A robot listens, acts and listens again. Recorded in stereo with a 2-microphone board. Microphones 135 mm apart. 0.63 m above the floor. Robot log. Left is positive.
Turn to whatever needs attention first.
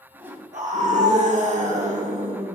note: The scream: about 55° right or 125° right.
cmd yaw -55
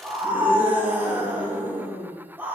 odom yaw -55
note: So it is at 15° right.
cmd yaw -15
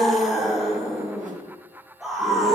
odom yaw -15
end: Found it: a scream, straight ahead, 1 to 2 m away.